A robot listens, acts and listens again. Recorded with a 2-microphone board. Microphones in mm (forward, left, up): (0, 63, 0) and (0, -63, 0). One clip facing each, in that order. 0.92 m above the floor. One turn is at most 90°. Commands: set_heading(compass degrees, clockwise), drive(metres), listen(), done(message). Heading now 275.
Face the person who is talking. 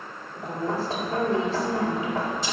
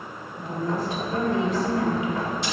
set_heading(240)
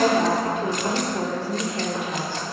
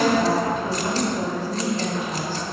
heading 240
set_heading(150)
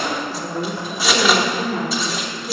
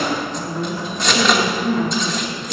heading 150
set_heading(80)
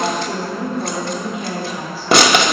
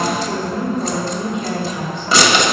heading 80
done("Found it: a woman speaking, straight ahead, 2 to 4 m away.")